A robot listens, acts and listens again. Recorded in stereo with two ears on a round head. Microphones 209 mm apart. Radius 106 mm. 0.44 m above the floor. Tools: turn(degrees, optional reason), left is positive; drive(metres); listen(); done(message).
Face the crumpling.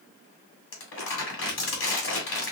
turn(degrees=55, reason="The crumpling: about 55° left or 125° left.")
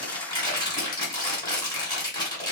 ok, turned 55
turn(degrees=25, reason="So it is at 25° left.")
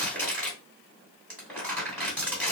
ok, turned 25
done("Found it: crumpling, straight ahead, 2 to 4 m away.")